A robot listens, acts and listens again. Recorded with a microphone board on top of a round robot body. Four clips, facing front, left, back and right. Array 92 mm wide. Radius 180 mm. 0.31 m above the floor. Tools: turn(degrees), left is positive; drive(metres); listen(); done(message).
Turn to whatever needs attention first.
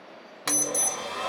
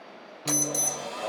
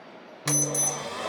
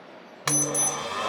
turn(degrees=65)
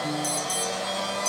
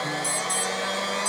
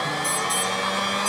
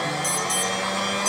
turn(degrees=-20)
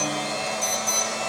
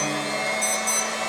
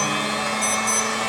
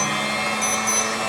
done("Found it: an alarm, straight ahead.")